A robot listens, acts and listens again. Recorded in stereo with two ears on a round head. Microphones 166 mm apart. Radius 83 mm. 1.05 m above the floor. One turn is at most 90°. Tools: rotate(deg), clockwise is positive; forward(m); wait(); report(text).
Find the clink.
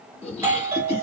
wait()
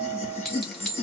rotate(-30)
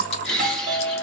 wait()
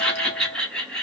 wait()
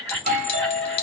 rotate(-90)
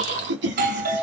rotate(-55)
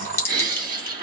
rotate(-10)
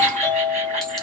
wait()
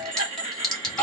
report("Facing the clink.")